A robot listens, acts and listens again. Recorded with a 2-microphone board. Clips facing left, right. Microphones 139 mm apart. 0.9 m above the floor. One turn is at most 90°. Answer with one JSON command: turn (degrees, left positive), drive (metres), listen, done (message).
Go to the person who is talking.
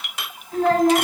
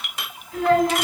{"turn": 45}
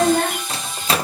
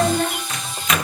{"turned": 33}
{"turn": 90}
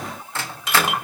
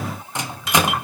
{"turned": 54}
{"turn": 50}
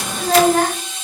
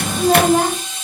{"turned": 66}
{"turn": -20}
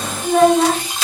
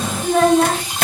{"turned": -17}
{"drive": 1.0}
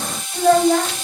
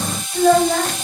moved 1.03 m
{"drive": 1.0}
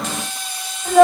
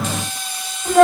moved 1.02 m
{"drive": 1.0}
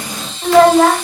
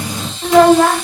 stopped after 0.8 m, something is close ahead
{"done": "I am next to the child speaking."}